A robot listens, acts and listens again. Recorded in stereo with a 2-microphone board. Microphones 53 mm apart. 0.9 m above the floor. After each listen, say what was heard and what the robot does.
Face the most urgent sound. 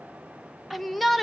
Turn 30° left.
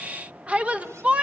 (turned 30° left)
So it is at 30° right. Turn 30° right.
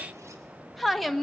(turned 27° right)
Found it: a shout, straight ahead, 1 to 2 m away.